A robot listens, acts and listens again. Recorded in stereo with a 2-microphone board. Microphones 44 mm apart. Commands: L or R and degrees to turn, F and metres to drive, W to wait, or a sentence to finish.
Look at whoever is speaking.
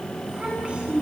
R25
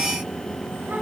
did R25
W
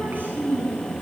R130
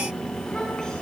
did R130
W
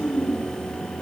L15
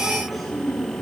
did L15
Found it: a child speaking, straight ahead.